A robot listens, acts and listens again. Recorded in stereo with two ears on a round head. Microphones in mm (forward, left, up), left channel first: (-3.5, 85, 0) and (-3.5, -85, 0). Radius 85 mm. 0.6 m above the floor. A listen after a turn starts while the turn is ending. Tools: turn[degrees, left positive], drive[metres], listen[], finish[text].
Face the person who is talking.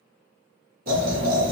Thought: The child speaking: about 65° right or 115° right.
Action: turn[-65]
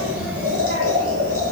Thought: So it is at 70° right.
Action: turn[-70]
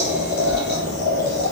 Thought: The child speaking is now 50° right.
Action: turn[-50]
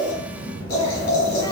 Thought: The child speaking is now 15° right.
Action: turn[-15]
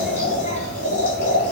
Action: finish[Found it: a child speaking, straight ahead.]